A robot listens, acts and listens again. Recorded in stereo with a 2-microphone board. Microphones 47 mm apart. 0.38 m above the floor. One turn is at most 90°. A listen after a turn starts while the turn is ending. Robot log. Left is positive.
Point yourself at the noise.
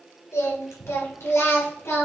note: The singing: about 60° left or 120° left.
cmd yaw +60
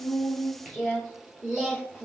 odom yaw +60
note: So it is at 15° right.
cmd yaw -15
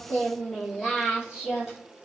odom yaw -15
note: The singing is now 10° right.
cmd yaw -10
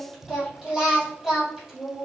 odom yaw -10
end: Facing the singing, 2 to 4 m away.